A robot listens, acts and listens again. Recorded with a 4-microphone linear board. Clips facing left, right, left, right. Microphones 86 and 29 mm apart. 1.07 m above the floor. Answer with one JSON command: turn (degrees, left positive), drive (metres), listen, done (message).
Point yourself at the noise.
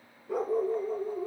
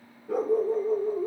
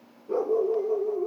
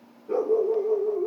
{"turn": -90}
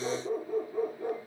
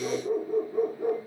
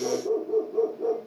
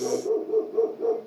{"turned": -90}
{"turn": -15}
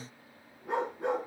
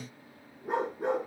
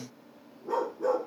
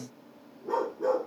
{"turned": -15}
{"done": "Found it: a dog barking, straight ahead, over 4 m away."}